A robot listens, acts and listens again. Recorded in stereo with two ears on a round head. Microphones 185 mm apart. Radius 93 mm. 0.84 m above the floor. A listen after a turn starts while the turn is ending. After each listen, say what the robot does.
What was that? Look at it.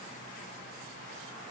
Keep listening.
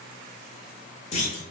Turn 35° left.
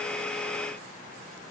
Keep listening.
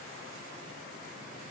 I heard a clunk, but can't make it out now. It was about straight ahead or 110° left.